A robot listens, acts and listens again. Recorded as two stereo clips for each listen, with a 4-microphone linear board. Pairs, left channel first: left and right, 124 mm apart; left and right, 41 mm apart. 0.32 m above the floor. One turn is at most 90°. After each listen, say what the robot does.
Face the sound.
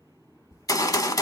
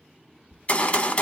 Turn 30° left.
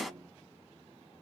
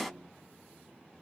Found it: a gunshot, straight ahead, under 1 m away.